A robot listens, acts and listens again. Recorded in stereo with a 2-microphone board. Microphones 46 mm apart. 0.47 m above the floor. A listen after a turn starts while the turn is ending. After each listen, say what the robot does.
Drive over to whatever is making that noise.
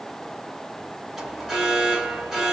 Turn 30° right.
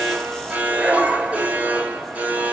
Turn 135° right.
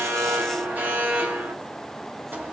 Turn 45° right.
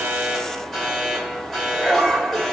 Drive 1.0 m forward.
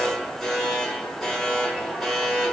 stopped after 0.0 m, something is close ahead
Turn 10° left.
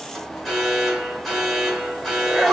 Something is in my way. I am facing the alarm but have not reached it.